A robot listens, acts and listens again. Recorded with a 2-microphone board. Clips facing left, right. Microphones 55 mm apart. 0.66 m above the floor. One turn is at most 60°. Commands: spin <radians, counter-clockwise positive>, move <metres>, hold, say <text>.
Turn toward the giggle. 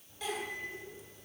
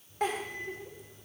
spin -0.87
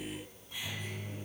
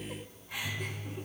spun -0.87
spin -1.05
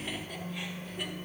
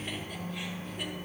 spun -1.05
spin -0.35
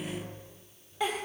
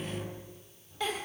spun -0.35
spin 0.26
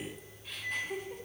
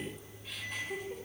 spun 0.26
say Found it: a giggle, straight ahead, 1 to 2 m away.